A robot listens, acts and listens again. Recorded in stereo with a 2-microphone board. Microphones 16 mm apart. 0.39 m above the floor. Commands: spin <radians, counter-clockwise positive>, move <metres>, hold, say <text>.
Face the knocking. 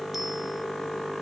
hold
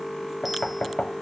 spin 1.13
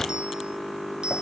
spin 0.61
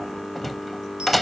say Facing the knocking.